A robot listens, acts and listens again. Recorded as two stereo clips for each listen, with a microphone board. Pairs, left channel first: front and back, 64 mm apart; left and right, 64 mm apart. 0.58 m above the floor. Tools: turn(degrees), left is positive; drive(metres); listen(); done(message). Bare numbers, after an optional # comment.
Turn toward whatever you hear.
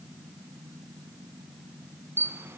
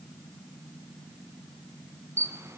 # The camera shutter: 130° right.
turn(-130)
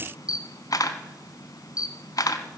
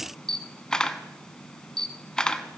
# The camera shutter is now 15° left.
turn(15)
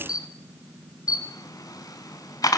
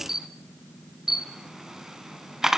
done("Facing the camera shutter.")